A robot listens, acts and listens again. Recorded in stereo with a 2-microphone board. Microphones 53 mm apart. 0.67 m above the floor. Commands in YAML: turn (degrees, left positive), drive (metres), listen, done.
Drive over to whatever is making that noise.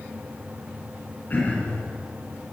turn: 30
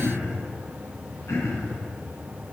turn: 115
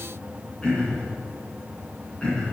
turn: 20
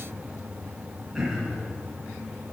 drive: 1.0
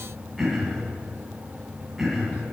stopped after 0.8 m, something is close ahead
done: "Blocked. The throat clearing is further on, straight ahead."